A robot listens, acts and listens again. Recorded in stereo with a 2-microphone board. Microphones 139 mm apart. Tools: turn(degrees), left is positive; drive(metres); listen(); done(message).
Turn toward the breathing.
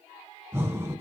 turn(degrees=-20)
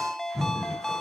done("Found it: breathing, straight ahead.")